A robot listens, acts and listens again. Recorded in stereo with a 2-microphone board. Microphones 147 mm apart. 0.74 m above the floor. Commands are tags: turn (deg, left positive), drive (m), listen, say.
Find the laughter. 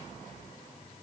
<listen/>
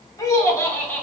<turn deg="30"/>
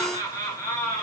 <turn deg="30"/>
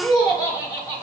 <turn deg="20"/>
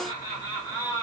<turn deg="150"/>
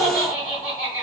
<turn deg="35"/>
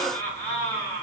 <turn deg="20"/>
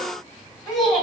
<say>Facing the laughter, 2 to 4 m away.</say>